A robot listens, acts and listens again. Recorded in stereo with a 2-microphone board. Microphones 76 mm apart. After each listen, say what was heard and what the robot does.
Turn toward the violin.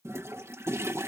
Keep listening.
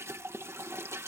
Keep listening.
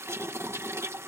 I can't make out a violin to turn to.